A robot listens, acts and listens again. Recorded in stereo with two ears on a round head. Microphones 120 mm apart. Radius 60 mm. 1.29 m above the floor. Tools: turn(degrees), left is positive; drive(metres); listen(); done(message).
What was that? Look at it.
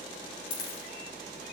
turn(degrees=70)
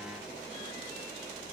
listen()
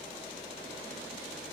done("I heard a dropped coin, but can't make it out now. It was about straight ahead or 40° left.")